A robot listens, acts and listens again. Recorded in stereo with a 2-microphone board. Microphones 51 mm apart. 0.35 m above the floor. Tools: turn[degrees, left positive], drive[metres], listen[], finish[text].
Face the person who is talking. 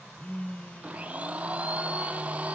Action: listen[]
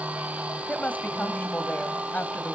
Thought: The woman speaking: about 35° left or 145° left.
Action: turn[35]
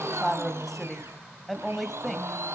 Action: finish[Found it: a woman speaking, straight ahead.]